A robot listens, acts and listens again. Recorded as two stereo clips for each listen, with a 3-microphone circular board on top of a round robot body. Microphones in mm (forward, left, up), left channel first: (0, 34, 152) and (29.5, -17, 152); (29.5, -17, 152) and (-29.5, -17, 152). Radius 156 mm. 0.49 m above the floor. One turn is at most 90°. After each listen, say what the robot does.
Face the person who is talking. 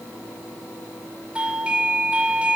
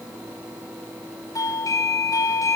Keep listening.
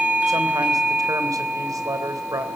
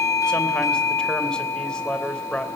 Turn 75° right.
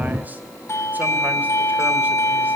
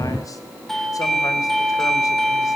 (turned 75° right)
Keep listening.
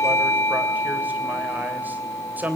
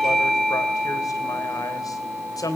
Facing the man speaking.